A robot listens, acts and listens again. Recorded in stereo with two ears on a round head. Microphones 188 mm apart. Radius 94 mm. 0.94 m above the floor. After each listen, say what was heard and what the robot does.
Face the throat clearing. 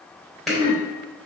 Turn 90° right.
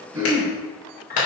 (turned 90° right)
So it is at 10° right. Turn 10° right.
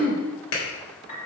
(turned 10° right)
Facing the throat clearing.